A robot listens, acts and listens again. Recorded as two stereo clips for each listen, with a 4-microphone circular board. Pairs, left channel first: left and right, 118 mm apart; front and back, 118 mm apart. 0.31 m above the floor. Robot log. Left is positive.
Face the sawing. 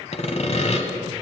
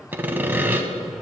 note: The sawing: 110° left.
cmd yaw +110
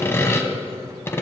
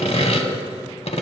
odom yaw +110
note: The sawing is now 25° left.
cmd yaw +25
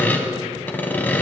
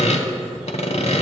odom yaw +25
note: The sawing is now 15° left.
cmd yaw +15
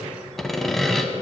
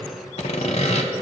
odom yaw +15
end: Found it: sawing, straight ahead.